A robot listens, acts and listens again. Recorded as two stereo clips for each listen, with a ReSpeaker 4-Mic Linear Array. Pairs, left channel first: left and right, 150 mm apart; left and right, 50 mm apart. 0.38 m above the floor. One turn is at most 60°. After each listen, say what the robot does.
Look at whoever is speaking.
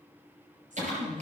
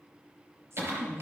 Turn 60° right.
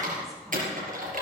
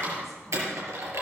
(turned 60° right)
Keep listening.
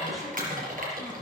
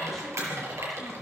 Keep listening.
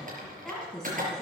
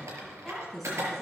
Facing the woman speaking.